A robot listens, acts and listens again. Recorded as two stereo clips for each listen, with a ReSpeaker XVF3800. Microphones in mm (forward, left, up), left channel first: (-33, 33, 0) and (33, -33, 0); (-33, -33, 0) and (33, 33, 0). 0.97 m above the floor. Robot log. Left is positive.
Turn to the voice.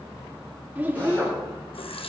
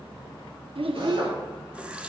note: The child speaking: 25° left.
cmd yaw +25
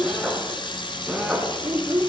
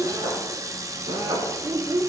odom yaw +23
end: Found it: a child speaking, straight ahead, 1 to 2 m away.